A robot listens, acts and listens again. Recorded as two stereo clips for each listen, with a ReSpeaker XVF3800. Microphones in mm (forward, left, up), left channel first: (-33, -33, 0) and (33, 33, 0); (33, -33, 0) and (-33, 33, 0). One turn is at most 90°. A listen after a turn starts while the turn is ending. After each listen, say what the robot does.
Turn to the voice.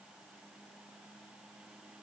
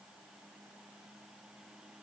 Keep listening.
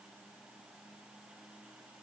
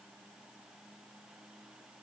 Keep listening.
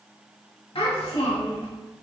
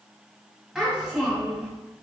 Turn 90° right.
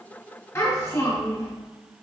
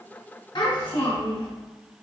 Turn 75° right.
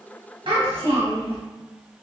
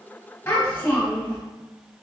Turn 25° left.
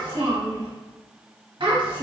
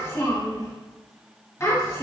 Turn 15° left.
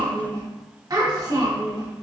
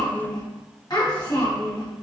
Facing the child speaking.